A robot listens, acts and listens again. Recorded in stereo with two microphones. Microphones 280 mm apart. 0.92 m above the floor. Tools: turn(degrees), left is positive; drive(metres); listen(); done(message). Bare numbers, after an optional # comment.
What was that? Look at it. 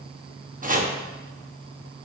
# The chopping: about 30° right or 150° right.
turn(-30)
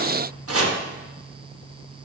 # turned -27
# So it is at 125° right.
turn(-125)
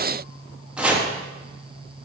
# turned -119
done("Facing the chopping.")